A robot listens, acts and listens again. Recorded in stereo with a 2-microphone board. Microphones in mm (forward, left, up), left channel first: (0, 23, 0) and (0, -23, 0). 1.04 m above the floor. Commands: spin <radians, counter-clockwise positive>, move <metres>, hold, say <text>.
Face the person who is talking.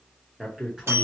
spin -0.26
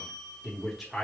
say Facing the man speaking.